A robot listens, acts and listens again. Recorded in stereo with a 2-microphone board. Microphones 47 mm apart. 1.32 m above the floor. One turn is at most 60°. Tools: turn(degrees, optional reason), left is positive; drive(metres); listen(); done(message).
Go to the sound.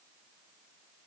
listen()
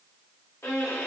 turn(degrees=60, reason="The violin: about 75° left or 105° left.")
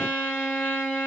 turn(degrees=25, reason="So it is at 25° left.")
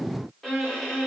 drive(metres=1.0)
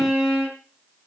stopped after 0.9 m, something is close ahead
done("I am next to the violin.")